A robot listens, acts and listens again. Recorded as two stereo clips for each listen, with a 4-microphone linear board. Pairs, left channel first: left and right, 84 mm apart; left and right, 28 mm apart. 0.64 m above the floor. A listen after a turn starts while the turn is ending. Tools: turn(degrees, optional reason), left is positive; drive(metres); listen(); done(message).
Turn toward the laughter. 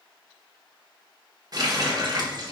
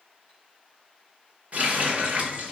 listen()
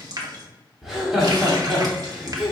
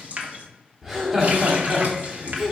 turn(degrees=-30)
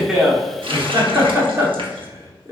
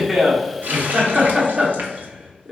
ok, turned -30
turn(degrees=-145, reason="So it is at 145° right.")
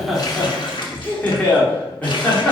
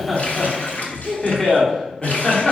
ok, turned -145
turn(degrees=20, reason="The laughter is now 20° left.")
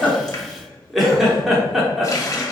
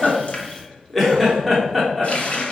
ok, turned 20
done("Found it: laughter, straight ahead, 1 to 2 m away.")